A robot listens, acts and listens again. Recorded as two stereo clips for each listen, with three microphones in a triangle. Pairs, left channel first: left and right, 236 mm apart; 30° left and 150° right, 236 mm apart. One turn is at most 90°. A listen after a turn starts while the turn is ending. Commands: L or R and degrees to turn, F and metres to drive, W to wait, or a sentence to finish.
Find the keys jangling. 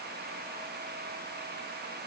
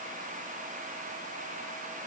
W
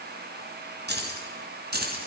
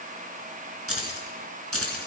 R90
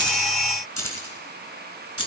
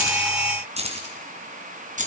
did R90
R90
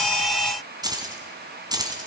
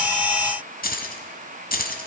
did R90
R20
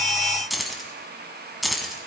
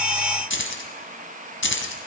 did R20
Facing the keys jangling, 2 to 4 m away.